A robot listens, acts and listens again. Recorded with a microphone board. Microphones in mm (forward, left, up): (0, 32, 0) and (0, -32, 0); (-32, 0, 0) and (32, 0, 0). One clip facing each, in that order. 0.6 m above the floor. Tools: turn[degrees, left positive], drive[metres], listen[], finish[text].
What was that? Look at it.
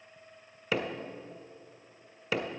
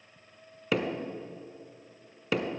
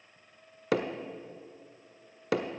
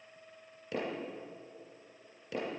Thought: The hammering: straight behind.
Action: turn[180]
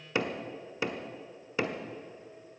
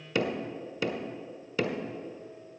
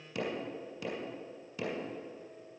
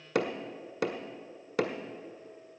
Thought: The hammering is now 25° left.
Action: turn[25]
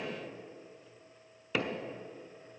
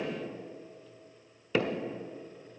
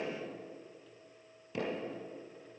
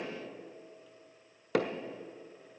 Action: finish[Found it: hammering, straight ahead, 1 to 2 m away.]